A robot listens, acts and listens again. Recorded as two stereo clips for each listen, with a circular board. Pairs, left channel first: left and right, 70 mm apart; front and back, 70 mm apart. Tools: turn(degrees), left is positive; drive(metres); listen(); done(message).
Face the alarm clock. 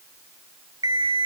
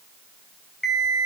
turn(degrees=-85)
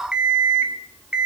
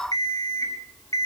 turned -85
turn(degrees=-15)
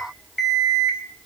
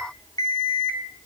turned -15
done("Facing the alarm clock.")